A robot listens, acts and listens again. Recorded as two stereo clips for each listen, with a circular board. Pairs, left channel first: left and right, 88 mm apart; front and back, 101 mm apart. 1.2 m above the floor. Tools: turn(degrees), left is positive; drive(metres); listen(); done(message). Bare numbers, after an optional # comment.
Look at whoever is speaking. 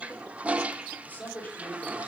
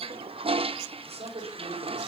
# The man speaking: 160° left.
turn(160)
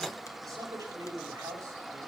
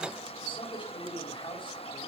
# The man speaking is now 35° right.
turn(-35)
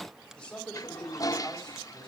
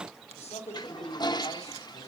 # The man speaking is now 10° left.
turn(10)
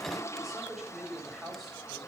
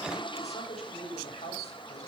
done("Found it: a man speaking, straight ahead, over 4 m away.")